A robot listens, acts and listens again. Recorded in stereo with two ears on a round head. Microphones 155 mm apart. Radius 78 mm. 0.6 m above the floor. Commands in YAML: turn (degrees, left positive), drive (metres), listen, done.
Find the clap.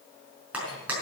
turn: -30
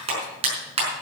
turn: -145
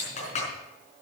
turn: 40
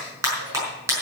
turn: -15
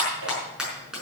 done: "Found it: a clap, straight ahead."